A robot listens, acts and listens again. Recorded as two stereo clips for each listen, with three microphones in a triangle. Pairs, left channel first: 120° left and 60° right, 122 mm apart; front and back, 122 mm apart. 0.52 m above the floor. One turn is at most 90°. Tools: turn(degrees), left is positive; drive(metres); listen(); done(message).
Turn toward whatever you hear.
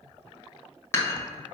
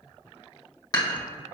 turn(degrees=55)
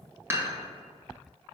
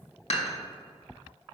done("Found it: dishes clattering, straight ahead.")